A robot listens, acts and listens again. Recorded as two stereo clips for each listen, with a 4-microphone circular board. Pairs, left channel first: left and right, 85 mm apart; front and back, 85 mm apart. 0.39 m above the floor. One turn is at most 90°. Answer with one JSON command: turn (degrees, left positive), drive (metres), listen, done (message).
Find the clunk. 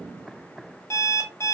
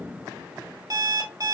{"listen": true}
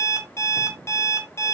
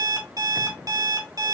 {"listen": true}
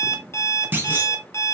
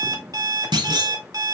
{"turn": -90}
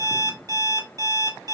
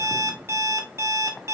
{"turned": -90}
{"turn": -65}
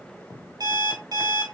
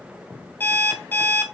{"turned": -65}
{"done": "Facing where the clunk came from. I can't hear it now."}